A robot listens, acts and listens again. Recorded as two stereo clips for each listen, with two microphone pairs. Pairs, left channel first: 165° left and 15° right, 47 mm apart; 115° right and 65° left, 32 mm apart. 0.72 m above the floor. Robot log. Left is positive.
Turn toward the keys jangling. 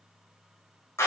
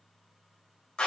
cmd idle
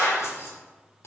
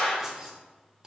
note: The keys jangling: 130° left.
cmd yaw +130
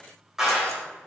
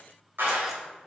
cmd idle
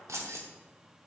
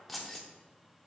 note: The keys jangling is now 30° right.
cmd yaw -30
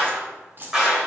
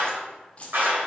note: The keys jangling is now 65° right.
cmd yaw -65
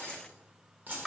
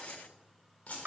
note: The keys jangling is now 70° right.
cmd yaw -70
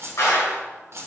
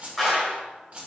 note: The keys jangling is now 15° left.
cmd yaw +15
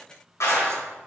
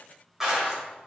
cmd idle
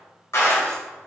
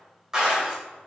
cmd idle
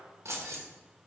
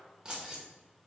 end: Found it: keys jangling, straight ahead.